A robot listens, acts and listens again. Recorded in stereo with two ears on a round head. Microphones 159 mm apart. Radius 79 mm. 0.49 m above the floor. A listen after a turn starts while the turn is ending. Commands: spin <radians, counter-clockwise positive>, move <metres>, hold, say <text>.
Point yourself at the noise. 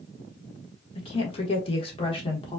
spin 0.52
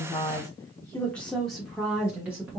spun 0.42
spin -0.17
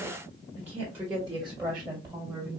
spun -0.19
spin -0.26
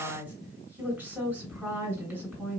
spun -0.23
say Found it: a woman speaking, straight ahead.